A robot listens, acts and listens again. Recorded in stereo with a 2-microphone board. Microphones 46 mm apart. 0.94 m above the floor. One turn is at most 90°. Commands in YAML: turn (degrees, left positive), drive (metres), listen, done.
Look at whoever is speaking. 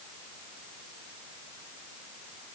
listen: true
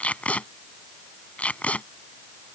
listen: true
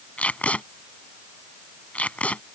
done: "I can't make out anyone speaking to turn to."